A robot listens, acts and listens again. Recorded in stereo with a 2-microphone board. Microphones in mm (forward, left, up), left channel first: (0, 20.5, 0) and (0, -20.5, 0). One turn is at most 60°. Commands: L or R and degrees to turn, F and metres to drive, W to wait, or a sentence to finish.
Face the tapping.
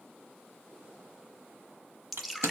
W
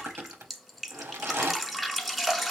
W
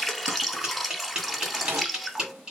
R20
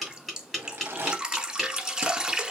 Found it: tapping, straight ahead.